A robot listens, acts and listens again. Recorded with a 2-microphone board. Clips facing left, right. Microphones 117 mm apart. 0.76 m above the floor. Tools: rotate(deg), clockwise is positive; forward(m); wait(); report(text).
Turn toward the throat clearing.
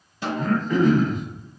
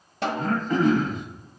rotate(40)
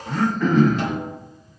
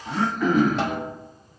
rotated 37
rotate(10)
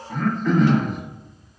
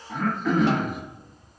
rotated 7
report("Facing the throat clearing.")